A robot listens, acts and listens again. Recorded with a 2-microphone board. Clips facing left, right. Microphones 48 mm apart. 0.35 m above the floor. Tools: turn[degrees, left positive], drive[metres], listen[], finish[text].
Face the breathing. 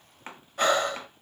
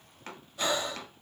Thought: The breathing: about 55° left or 125° left.
Action: turn[55]
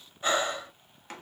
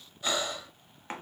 Thought: So it is at 40° left.
Action: turn[40]
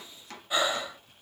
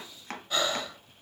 Thought: The breathing is now 15° left.
Action: turn[15]
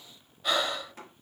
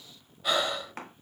Action: finish[Found it: breathing, straight ahead, under 1 m away.]